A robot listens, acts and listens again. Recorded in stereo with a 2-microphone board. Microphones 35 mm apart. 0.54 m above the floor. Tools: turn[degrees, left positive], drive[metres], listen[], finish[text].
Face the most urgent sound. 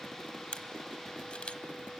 Action: listen[]
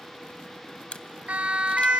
Thought: The siren: about 45° right or 135° right.
Action: turn[-45]
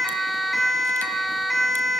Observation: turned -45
Action: finish[Found it: a siren, straight ahead.]